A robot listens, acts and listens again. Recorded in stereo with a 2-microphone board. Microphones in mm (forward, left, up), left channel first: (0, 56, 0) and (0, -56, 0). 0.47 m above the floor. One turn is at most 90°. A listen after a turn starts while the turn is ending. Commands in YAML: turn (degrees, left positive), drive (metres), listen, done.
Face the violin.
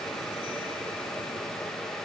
listen: true
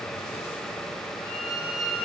turn: -90
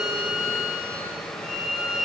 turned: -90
done: "Facing the violin."